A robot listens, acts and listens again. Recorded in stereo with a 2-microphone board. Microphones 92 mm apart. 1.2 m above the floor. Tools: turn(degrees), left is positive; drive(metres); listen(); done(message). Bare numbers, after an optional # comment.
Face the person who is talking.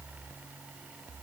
listen()
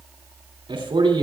# The man speaking: about 60° right or 120° right.
turn(-60)
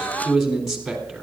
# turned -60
done("Facing the man speaking, 2 to 4 m away.")